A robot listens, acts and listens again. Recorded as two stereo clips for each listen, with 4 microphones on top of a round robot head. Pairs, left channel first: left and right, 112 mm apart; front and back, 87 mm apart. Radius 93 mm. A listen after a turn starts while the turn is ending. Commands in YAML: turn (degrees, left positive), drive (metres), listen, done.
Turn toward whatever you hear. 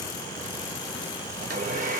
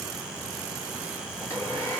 turn: -75
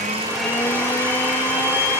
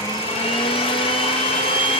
turn: 15
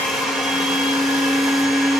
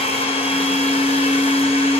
done: "Facing the blender."